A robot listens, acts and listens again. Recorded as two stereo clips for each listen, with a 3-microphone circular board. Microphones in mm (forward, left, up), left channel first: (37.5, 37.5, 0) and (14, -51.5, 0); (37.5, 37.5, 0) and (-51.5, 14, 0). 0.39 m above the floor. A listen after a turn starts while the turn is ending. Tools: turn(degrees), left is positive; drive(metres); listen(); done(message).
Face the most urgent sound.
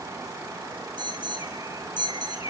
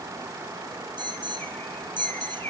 turn(degrees=-135)
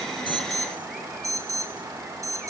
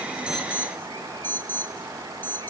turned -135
turn(degrees=-55)
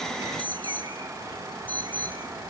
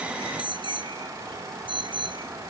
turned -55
done("Facing the alarm.")